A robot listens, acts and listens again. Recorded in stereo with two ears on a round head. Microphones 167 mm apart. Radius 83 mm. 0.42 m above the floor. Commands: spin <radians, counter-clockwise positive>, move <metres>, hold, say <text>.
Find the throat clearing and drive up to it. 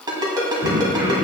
spin -1.22
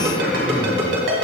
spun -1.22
move 1.0
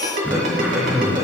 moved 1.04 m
move 1.0
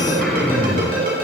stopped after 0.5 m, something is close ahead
say I am next to the throat clearing.